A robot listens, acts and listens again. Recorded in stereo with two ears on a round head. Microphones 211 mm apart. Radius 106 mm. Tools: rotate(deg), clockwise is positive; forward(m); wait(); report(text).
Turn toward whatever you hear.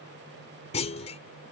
rotate(-30)
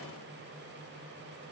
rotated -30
wait()
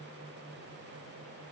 report("I heard a clunk, but can't make it out now. It was about straight ahead or 120° left.")